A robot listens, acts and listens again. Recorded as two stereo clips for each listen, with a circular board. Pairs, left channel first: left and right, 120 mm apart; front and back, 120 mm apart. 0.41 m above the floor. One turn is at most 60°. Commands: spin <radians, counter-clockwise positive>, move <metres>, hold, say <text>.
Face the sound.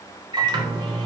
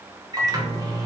spin -1.05
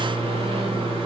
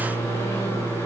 spin -1.05
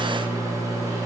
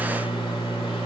spin -0.61
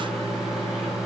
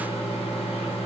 say Facing the microwave.